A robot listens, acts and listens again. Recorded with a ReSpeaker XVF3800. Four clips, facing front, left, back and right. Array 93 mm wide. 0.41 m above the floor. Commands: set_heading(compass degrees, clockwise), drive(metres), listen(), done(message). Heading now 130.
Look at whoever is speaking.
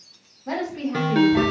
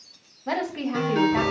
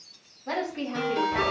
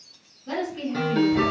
set_heading(40)
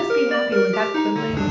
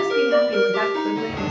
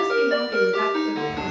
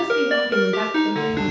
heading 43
listen()
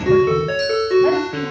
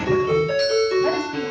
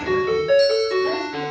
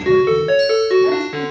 listen()
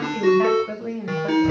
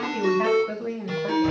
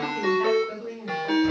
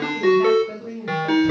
set_heading(8)
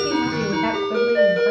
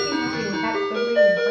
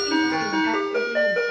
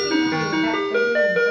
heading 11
listen()
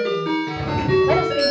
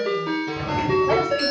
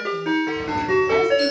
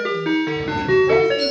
listen()
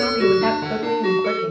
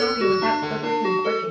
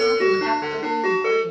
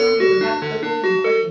done("I heard a woman speaking from this way, but can't make it out now.")